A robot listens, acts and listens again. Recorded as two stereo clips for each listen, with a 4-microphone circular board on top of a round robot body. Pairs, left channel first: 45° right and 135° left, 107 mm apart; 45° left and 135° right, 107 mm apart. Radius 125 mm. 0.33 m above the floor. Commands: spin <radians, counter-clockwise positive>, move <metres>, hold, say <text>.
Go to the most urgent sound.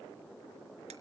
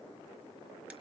hold
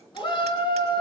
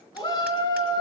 move 1.0
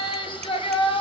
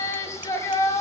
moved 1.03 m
spin -0.26
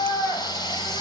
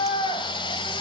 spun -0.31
move 1.0
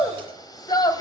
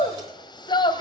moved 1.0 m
move 1.0
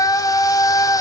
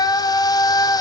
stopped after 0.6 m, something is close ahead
say I am next to the shout.